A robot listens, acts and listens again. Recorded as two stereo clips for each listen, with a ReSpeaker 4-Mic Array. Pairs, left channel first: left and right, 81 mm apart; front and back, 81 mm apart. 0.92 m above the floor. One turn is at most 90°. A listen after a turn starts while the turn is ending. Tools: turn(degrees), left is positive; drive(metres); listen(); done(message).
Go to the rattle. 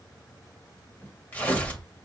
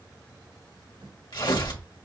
listen()
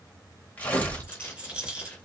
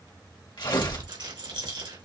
turn(degrees=-90)
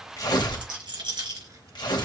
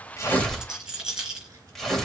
turn(degrees=-90)
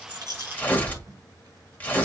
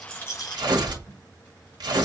turn(degrees=-10)
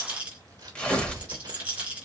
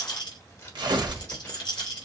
turn(degrees=-20)
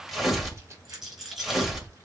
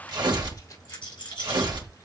drive(metres=1.0)
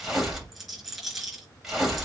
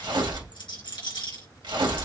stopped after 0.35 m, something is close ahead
done("Something is in my way. I am facing the rattle but have not reached it.")